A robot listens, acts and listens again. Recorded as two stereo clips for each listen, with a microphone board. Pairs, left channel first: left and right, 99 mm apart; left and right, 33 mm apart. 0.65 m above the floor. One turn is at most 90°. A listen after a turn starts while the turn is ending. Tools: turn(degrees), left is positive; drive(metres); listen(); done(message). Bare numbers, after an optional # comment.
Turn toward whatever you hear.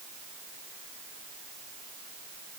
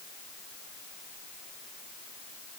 listen()
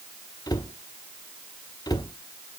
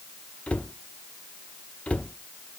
# The cupboard door: about 40° left or 140° left.
turn(40)
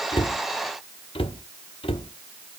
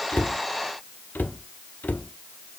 # So it is at 95° left.
turn(90)
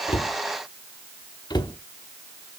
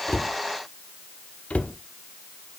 # The cupboard door is now 50° left.
turn(50)
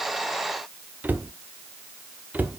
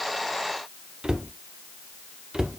# The cupboard door is now 20° right.
turn(-20)
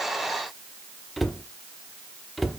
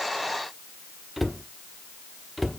done("Found it: a cupboard door, straight ahead, under 1 m away.")